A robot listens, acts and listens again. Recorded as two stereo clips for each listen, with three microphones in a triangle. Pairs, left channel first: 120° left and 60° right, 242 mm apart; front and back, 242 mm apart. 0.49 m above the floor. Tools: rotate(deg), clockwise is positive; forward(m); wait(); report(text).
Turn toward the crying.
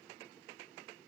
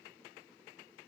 wait()
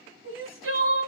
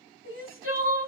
rotate(30)
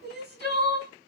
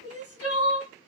rotate(15)
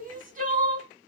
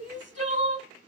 report("Found it: crying, straight ahead, 1 to 2 m away.")